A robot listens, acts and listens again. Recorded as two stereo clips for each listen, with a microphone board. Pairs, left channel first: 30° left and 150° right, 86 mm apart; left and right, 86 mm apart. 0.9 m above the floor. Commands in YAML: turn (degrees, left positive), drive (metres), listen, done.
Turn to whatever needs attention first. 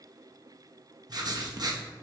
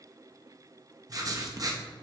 listen: true
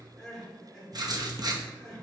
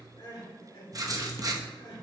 turn: 115
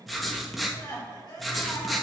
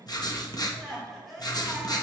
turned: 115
done: "Facing the crying, 2 to 4 m away."